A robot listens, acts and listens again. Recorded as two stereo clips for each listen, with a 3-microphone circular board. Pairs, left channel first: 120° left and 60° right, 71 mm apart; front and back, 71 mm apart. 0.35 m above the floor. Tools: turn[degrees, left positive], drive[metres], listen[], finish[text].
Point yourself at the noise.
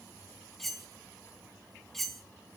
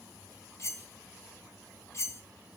Thought: The cutlery clinking: 35° left.
Action: turn[35]
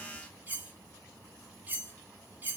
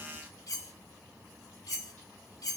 Action: finish[Found it: cutlery clinking, straight ahead, 1 to 2 m away.]